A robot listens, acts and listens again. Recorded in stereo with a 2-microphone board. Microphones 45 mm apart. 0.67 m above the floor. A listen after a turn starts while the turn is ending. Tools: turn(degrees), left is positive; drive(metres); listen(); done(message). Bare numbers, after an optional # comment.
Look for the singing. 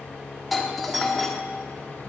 listen()
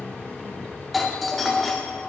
listen()
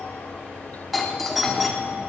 done("I can't make out singing, only tape being pulled and a doorbell.")